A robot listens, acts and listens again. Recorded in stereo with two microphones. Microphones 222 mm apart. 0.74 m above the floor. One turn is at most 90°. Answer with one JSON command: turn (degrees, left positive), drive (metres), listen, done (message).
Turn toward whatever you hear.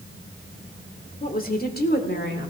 {"turn": 50}
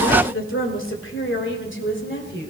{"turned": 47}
{"turn": 55}
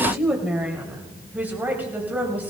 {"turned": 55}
{"turn": -10}
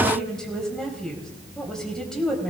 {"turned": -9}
{"done": "Facing the woman speaking."}